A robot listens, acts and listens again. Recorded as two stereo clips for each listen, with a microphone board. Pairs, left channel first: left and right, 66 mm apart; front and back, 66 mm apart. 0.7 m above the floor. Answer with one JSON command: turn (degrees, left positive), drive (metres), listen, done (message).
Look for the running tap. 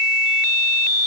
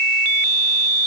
{"listen": true}
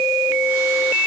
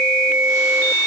{"listen": true}
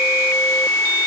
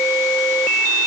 {"done": "I can't make out a running tap to turn to."}